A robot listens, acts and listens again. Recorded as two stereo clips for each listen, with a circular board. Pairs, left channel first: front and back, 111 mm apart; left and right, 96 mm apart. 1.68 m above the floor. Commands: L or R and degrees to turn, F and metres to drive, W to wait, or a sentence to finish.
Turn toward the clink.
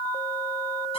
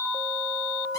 W
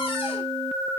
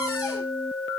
W
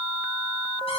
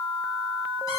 I can't make out a clink to turn to.